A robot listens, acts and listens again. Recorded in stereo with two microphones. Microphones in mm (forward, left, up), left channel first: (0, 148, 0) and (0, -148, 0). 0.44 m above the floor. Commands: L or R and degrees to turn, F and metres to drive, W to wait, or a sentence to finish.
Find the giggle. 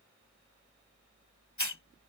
W
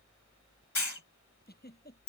L30
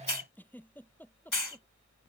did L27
Found it: a giggle, straight ahead.